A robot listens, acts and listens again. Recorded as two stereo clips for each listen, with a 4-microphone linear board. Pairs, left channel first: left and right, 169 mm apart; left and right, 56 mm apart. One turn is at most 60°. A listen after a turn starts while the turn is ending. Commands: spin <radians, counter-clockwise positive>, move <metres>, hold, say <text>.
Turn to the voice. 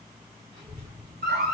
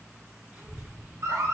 spin -0.44
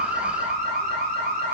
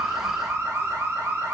spin -1.05
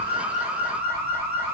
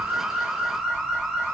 spin -1.05
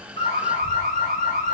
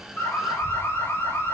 spin -0.17
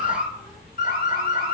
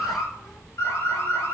say Found it: a child speaking, straight ahead.